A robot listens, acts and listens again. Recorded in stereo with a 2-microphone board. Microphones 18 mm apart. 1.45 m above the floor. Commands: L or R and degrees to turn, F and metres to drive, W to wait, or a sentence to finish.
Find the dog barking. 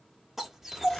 R20
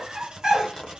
R135
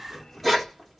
Facing the dog barking.